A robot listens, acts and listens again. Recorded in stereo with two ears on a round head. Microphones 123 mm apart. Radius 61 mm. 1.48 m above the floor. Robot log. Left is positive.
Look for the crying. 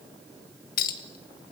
cmd idle
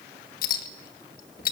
cmd idle
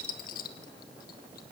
end: I can't make out crying to turn to.